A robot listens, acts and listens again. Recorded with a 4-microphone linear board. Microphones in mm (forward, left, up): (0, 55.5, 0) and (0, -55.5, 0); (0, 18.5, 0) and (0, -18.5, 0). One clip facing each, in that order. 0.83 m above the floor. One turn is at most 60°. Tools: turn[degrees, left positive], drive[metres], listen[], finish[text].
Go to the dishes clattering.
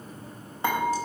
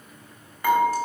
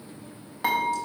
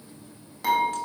Thought: The dishes clattering: about 25° left or 155° left.
Action: turn[25]
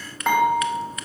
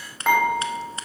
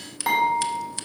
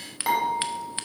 Action: drive[1.0]
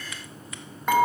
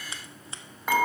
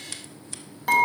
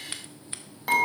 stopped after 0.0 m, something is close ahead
Action: finish[Something is in my way. I am facing the dishes clattering but have not reached it.]